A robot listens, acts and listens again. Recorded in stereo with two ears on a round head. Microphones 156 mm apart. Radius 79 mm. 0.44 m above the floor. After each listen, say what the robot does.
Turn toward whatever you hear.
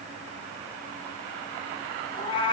Turn 30° left.
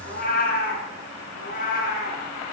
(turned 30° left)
Turn 130° left.
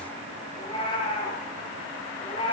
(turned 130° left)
Turn 30° left.
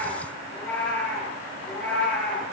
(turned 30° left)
Turn 10° left.
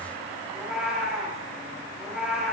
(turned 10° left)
Facing the cat meowing, over 4 m away.